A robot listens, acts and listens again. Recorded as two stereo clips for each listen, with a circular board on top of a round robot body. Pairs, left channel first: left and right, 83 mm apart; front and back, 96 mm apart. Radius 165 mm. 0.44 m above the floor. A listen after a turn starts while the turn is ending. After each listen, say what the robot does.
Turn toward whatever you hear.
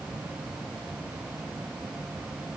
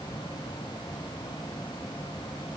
Keep listening.
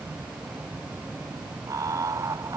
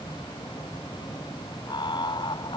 Turn 35° right.
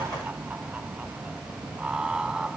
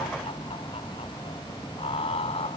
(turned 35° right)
Turn 10° right.
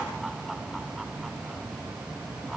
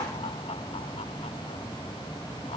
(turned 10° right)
Keep listening.
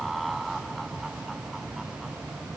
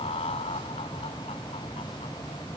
Facing the laughter.